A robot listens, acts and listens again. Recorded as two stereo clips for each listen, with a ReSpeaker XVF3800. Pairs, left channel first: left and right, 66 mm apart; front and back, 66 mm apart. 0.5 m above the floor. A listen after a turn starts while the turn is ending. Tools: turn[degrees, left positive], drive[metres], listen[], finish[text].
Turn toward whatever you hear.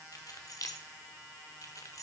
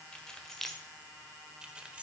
Thought: The keys jangling: 110° left.
Action: turn[110]
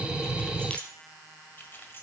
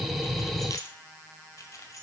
Thought: The keys jangling is now 35° left.
Action: turn[35]
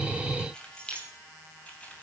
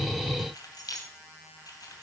Thought: The keys jangling is now 20° left.
Action: turn[20]
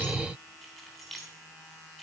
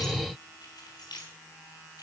Action: finish[Found it: keys jangling, straight ahead.]